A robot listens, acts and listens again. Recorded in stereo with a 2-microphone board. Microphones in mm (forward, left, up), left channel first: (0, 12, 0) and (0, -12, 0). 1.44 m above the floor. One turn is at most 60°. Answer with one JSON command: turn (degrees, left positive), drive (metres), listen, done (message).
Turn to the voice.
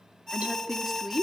{"turn": -20}
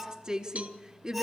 {"turn": -60}
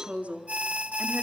{"turn": -60}
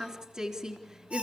{"turn": -20}
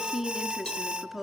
{"turn": -10}
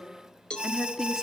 {"done": "Facing the woman speaking."}